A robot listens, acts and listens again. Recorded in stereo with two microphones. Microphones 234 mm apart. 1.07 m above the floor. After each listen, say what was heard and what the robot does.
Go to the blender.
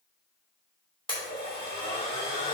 The blender: about 20° left or 160° left. Turn 20° left.
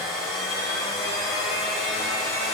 Drive 1.0 m forward.
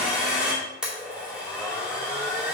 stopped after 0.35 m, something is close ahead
Something is in my way. I am facing the blender but have not reached it.